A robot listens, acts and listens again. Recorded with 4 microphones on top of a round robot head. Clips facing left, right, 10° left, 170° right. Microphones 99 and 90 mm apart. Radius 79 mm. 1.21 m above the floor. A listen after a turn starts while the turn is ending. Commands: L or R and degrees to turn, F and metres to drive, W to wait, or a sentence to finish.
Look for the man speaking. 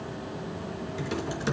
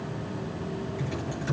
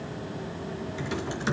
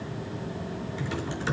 W
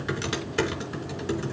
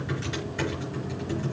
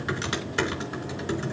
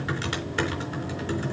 W
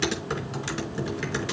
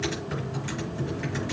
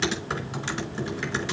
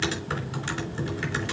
I can't make out a man speaking, only typing on a keyboard.